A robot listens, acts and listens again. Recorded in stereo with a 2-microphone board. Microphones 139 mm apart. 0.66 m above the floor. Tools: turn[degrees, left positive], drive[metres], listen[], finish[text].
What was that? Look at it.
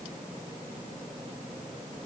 Action: listen[]
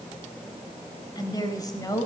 Thought: The woman speaking: about 25° left or 155° left.
Action: turn[25]
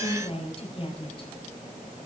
Thought: The woman speaking: about 40° left or 140° left.
Action: turn[40]
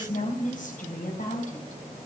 Thought: So it is at 110° left.
Action: turn[110]
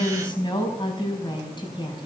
Thought: The woman speaking is now 35° left.
Action: turn[35]
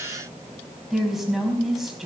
Action: finish[Found it: a woman speaking, straight ahead.]